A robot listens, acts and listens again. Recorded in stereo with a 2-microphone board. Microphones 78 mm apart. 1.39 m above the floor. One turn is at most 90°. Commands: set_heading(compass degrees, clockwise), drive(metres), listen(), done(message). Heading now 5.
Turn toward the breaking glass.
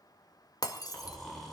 set_heading(310)
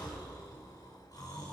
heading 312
listen()
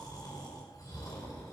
done("I heard breaking glass, but can't make it out now. It was about straight ahead or 75° left.")